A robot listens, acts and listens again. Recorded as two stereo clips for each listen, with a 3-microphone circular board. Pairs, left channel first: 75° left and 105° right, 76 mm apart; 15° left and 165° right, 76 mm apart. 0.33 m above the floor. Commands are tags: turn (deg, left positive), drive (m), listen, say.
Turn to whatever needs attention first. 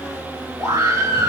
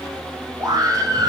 <turn deg="-130"/>
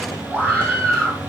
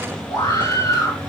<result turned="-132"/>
<say>Facing the scream.</say>